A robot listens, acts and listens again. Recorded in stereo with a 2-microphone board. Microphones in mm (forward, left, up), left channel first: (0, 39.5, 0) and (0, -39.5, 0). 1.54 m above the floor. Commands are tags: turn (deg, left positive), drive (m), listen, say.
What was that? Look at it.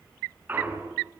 <turn deg="-25"/>
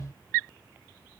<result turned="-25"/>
<listen/>
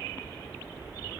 <say>I heard a clunk, but can't make it out now. It was about straight ahead or 130° right.</say>